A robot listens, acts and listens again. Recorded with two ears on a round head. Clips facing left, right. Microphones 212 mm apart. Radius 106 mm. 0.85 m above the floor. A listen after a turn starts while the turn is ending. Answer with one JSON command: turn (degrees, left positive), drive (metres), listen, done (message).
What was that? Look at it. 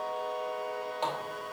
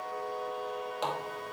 {"turn": -15}
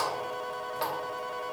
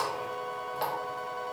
{"done": "Found it: a running tap, straight ahead, under 1 m away."}